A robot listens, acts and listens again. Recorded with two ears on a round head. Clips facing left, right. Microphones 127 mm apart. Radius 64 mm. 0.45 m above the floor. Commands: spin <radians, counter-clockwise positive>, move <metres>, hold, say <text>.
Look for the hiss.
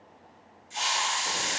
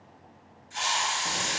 spin 0.52
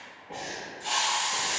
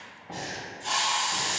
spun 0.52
say Found it: a hiss, straight ahead, 1 to 2 m away.